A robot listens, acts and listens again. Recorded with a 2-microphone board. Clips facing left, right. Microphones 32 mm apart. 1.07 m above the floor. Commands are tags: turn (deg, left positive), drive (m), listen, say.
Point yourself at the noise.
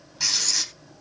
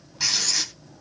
<turn deg="-30"/>
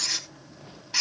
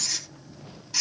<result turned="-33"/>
<turn deg="25"/>
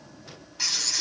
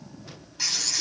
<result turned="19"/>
<say>Found it: writing, straight ahead.</say>